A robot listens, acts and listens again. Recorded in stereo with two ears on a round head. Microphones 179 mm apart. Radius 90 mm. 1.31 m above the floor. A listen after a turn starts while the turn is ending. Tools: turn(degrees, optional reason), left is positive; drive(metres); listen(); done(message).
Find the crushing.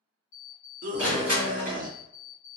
turn(degrees=-30)
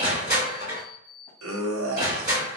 turn(degrees=-140, reason="So it is at 140° right.")
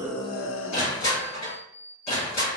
turn(degrees=35, reason="The crushing is now 35° left.")
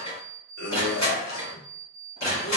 turn(degrees=20, reason="The crushing is now 20° left.")
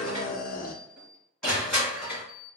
done("Facing the crushing, 1 to 2 m away.")